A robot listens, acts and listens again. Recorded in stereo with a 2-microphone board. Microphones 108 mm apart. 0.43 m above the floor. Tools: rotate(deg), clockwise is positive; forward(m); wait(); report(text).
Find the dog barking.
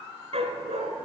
rotate(70)
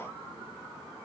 wait()
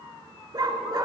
rotate(40)
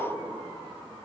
wait()
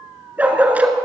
rotate(15)
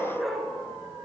report("Facing the dog barking, 1 to 2 m away.")